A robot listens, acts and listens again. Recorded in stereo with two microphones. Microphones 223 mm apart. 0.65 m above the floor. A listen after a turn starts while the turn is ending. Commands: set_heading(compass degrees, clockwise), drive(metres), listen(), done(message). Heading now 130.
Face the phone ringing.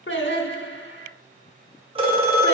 set_heading(155)
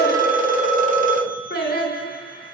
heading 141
set_heading(286)
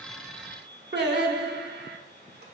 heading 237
set_heading(287)
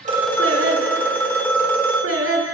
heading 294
set_heading(284)
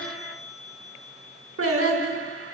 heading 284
listen()
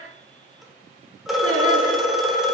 done("Facing the phone ringing.")